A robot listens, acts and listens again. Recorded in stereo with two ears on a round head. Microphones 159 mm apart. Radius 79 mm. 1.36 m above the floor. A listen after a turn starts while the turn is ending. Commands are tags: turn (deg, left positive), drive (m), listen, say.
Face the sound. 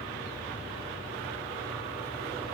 <listen/>
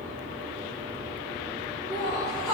<turn deg="20"/>
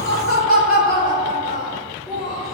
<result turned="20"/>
<say>Found it: laughter, straight ahead, over 4 m away.</say>